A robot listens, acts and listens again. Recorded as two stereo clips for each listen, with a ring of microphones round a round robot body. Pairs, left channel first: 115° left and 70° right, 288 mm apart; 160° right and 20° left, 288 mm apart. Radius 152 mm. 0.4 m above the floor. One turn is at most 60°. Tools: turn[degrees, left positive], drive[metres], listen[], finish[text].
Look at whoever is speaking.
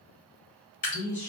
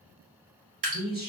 Thought: The man speaking: 80° left.
Action: turn[60]
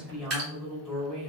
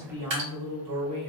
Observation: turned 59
Thought: The man speaking is now 20° left.
Action: turn[20]
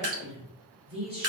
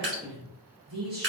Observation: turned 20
Action: finish[Facing the man speaking.]